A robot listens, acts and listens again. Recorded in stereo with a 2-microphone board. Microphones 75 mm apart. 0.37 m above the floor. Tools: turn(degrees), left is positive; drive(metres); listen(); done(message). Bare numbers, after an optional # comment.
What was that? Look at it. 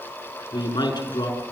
# The man speaking: about 75° left or 105° left.
turn(75)
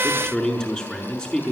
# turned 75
# So it is at 10° left.
turn(10)
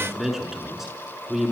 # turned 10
done("Found it: a man speaking, straight ahead, over 4 m away.")